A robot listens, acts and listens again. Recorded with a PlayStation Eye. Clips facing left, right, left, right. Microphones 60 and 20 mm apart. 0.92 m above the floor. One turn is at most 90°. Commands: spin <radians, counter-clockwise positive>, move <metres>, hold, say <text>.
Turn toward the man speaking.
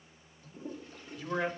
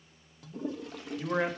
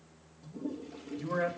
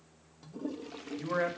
spin -0.52
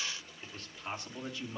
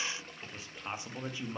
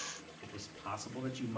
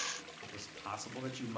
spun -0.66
spin -0.44
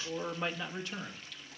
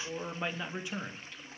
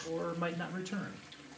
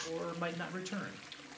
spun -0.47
spin -0.35
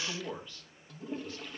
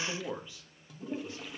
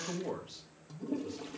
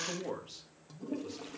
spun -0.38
spin -0.26
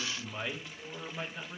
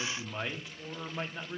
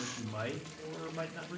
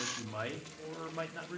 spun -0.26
spin -0.26
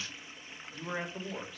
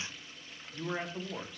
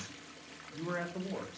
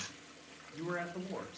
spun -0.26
say Facing the man speaking.